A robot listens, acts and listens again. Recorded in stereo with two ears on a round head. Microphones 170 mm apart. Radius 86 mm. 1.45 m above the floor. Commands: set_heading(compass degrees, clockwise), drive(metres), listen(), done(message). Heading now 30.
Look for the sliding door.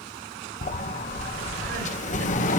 set_heading(350)
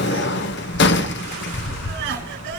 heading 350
set_heading(260)
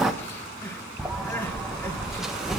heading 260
done("Facing the sliding door, under 1 m away.")